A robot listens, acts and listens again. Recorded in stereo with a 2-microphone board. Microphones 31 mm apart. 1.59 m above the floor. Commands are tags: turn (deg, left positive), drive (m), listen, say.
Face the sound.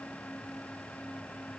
<listen/>
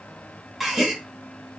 <turn deg="-30"/>
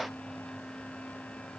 <listen/>
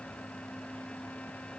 <say>I heard a gasp, but can't make it out now. It was about 20° left or 140° right.</say>